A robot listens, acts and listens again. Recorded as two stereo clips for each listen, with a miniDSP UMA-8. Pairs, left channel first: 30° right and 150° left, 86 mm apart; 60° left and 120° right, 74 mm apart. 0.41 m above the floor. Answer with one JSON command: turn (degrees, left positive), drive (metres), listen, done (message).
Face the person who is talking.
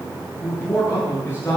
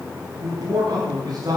{"turn": -90}
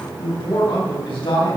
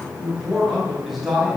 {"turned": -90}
{"turn": -30}
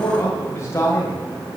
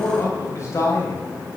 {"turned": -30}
{"turn": 25}
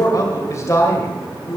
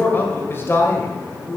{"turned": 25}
{"turn": 25}
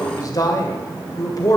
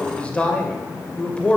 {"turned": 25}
{"done": "Facing the man speaking."}